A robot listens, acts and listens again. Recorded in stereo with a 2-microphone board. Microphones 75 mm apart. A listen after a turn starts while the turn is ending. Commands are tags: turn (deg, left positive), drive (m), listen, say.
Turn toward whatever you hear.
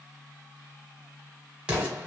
<turn deg="-30"/>
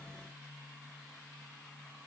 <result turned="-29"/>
<listen/>
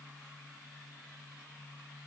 <say>I heard an explosion, but can't make it out now. It was about 15° left or 135° right.</say>